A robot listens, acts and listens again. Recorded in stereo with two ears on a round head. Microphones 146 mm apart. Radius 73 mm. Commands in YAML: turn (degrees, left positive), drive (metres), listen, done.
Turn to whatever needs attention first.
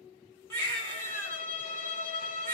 turn: 15
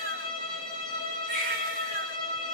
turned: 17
done: "Found it: a baby crying, straight ahead, 1 to 2 m away."